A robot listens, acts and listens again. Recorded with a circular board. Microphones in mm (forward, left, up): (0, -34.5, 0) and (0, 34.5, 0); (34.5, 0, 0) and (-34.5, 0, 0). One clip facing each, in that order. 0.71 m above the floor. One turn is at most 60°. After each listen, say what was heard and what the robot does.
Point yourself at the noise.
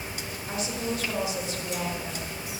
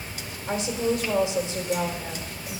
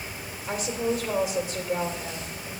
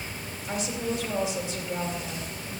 The woman speaking: 30° left. Turn 30° left.
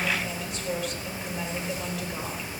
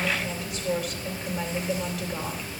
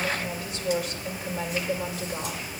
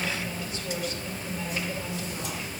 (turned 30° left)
Facing the woman speaking.